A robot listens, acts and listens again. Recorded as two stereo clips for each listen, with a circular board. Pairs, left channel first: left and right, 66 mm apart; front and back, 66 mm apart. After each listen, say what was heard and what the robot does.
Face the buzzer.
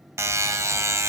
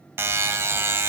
The buzzer: 130° right. Turn 130° right.
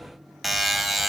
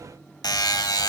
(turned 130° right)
Found it: a buzzer, straight ahead, 1 to 2 m away.